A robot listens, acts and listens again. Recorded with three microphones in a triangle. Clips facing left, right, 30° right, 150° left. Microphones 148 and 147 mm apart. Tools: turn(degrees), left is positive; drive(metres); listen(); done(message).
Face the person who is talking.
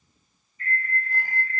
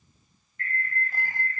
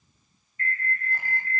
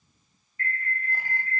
listen()
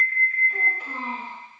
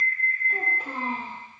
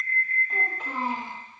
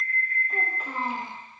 turn(degrees=-120)
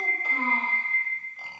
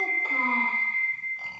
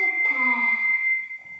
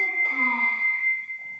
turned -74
turn(degrees=-50)
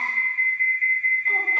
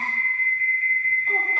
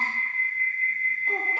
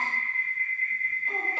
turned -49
listen()
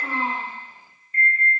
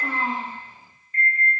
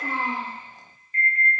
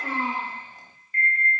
done("Facing the child speaking, 2 to 4 m away.")